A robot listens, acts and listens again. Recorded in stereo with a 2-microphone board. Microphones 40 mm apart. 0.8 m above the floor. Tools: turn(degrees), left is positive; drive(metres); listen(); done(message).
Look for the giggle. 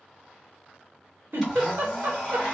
turn(degrees=-70)
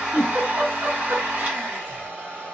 turn(degrees=-40)
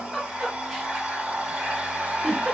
done("Found it: a giggle, straight ahead.")